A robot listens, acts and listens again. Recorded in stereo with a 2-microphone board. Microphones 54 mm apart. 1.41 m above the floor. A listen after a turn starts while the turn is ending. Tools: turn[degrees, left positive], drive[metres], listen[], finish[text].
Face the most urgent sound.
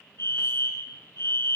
Thought: The fire alarm: about 60° left or 120° left.
Action: turn[60]
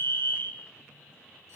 Thought: So it is at 40° left.
Action: turn[40]
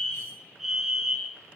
Action: finish[Found it: a fire alarm, straight ahead, 1 to 2 m away.]